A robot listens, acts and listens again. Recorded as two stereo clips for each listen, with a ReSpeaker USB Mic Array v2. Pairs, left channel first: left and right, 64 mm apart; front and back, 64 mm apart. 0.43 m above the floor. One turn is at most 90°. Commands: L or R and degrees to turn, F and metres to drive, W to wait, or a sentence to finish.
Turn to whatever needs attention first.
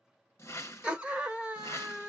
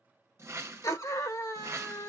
R20
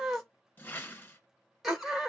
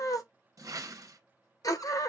Found it: a scream, straight ahead.